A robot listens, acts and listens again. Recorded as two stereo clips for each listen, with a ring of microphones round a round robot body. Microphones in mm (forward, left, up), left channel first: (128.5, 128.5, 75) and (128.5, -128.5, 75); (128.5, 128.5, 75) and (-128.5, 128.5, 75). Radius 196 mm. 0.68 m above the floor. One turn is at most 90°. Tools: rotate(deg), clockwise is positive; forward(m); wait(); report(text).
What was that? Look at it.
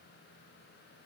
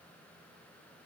wait()
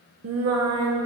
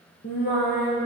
rotate(70)
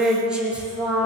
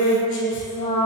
report("Found it: singing, straight ahead, 2 to 4 m away.")